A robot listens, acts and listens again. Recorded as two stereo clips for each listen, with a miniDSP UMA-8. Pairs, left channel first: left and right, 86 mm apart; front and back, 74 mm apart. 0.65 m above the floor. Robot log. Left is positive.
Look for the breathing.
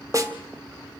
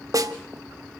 cmd idle
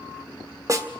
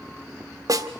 cmd idle
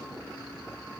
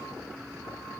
end: I can't make out breathing, only a snare drum.